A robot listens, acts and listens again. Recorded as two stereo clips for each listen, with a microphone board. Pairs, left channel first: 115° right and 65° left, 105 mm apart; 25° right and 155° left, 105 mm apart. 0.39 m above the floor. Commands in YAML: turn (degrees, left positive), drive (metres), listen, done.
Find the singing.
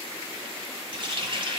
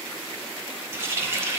listen: true
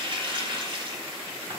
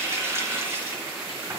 listen: true
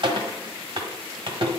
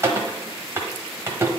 done: "I can't make out singing to turn to."